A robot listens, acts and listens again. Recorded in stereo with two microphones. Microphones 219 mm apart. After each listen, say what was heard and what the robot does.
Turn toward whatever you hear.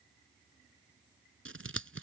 Turn 90° right.
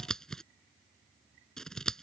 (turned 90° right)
Facing the scissors.